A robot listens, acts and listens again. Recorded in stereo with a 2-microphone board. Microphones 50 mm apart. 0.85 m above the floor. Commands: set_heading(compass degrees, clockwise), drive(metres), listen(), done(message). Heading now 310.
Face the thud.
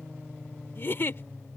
listen()
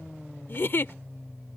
listen()
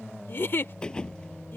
set_heading(295)
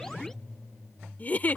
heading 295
listen()
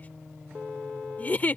done("I heard a thud, but can't make it out now. It was about straight ahead or 150° left.")